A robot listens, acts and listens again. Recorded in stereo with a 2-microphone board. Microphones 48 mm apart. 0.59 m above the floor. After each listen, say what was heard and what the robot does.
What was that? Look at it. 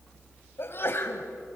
The sneeze: about 50° left or 130° left. Turn 50° left.
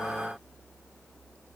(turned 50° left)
Keep listening.
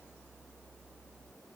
I heard a sneeze, but can't make it out now. It was about straight ahead or 80° left.